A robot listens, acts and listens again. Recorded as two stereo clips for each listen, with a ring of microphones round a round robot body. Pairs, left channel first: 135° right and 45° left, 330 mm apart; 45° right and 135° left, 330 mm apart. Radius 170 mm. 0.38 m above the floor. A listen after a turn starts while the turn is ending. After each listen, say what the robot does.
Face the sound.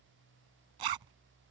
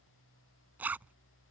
Turn 50° left.
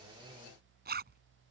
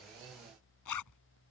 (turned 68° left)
Turn 15° right.
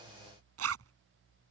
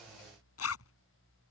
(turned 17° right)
Facing the zipper.